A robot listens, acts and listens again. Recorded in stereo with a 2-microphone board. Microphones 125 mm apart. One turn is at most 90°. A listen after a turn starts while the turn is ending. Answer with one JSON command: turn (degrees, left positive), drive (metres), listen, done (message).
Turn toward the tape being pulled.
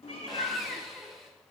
{"listen": true}
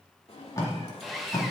{"turn": 30}
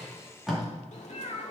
{"done": "Found it: tape being pulled, straight ahead, 2 to 4 m away."}